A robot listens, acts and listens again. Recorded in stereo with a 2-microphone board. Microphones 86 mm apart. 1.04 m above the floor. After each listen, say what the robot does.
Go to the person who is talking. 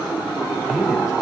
Turn 30° right.
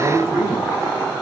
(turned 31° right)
Turn 145° right.
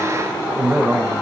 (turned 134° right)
Turn 10° right.
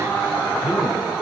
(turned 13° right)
Drive 1.0 m forward.
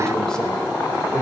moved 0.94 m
Drive 1.0 m forward.
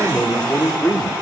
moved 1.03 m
Turn 15° left.
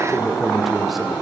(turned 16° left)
Drive 1.0 m forward.
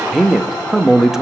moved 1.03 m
Drive 1.0 m forward.
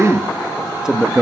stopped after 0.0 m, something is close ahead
Turn 10° right.
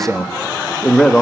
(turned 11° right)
I am next to the man speaking.